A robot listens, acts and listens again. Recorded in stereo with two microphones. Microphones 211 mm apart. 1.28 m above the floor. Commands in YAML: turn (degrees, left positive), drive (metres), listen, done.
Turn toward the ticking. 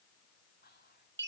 listen: true
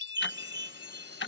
turn: 70
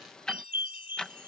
done: "Found it: ticking, straight ahead."